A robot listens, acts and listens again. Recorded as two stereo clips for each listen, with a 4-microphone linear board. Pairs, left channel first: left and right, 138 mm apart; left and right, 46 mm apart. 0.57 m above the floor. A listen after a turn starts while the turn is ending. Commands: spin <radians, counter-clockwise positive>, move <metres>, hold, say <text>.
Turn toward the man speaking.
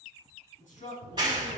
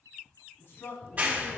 spin 1.22
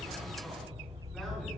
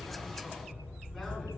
hold
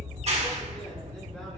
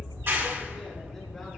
hold
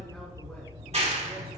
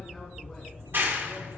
say I heard a man speaking, but can't make it out now. It was about straight ahead or 40° left.